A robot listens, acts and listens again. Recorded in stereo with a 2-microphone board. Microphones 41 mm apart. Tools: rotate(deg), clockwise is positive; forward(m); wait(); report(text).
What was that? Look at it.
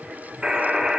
rotate(20)
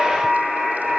report("Facing the buzzer, 1 to 2 m away.")